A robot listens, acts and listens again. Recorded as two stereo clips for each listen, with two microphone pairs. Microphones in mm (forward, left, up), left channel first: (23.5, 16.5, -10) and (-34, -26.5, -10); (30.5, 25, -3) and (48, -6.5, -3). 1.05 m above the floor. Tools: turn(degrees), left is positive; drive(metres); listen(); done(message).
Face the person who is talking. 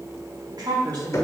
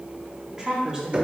turn(degrees=-130)
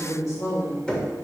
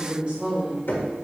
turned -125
done("Facing the woman speaking, 2 to 4 m away.")